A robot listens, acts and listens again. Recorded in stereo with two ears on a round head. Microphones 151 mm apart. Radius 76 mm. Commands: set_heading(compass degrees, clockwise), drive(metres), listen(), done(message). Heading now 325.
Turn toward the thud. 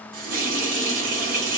listen()
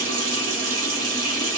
listen()
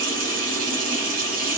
done("I can't make out a thud, only a running tap.")